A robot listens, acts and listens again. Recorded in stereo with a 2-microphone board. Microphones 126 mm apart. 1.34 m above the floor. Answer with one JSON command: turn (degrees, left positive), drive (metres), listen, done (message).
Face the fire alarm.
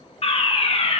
{"turn": 50}
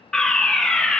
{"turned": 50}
{"done": "Found it: a fire alarm, straight ahead."}